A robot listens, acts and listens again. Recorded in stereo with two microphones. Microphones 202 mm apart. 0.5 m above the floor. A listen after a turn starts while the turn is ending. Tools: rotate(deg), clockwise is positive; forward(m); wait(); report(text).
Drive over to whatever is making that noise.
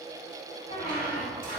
rotate(-45)
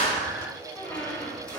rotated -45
forward(1.0)
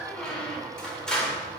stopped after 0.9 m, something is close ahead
report("Arrived at the squeak, straight ahead.")